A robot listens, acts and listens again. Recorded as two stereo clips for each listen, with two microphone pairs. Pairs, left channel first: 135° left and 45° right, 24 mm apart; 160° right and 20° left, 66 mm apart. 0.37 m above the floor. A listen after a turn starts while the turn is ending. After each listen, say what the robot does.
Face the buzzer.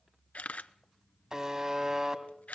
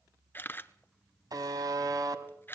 Turn 15° left.
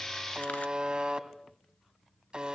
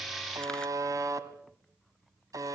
Found it: a buzzer, straight ahead.